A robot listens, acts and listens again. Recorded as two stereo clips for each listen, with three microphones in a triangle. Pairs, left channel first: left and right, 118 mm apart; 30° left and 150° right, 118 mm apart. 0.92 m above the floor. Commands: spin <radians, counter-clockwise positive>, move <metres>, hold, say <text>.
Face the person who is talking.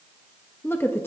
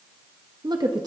spin 2.79
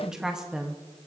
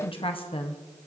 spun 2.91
say Facing the woman speaking, under 1 m away.